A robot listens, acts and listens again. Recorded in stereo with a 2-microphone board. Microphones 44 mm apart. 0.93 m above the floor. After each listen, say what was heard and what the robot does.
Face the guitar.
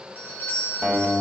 The guitar: about 45° right or 135° right. Turn 45° right.
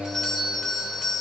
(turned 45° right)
Facing the guitar, 2 to 4 m away.